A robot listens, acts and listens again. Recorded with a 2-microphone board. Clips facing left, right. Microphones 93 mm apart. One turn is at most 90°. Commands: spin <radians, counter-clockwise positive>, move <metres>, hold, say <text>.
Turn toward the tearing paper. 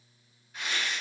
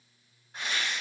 spin -0.79
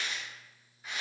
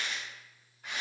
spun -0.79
spin -1.48
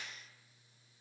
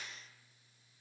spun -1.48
hold
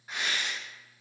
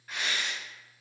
spin 0.35
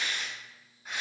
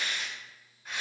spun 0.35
spin 0.17
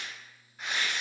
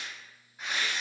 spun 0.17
say Found it: tearing paper, straight ahead, 1 to 2 m away.